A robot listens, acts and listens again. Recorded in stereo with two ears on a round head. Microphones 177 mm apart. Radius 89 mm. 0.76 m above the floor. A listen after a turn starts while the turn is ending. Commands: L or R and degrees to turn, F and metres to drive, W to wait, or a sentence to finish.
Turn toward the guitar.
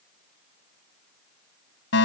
W
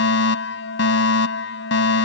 W
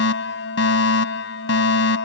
I can't make out a guitar to turn to.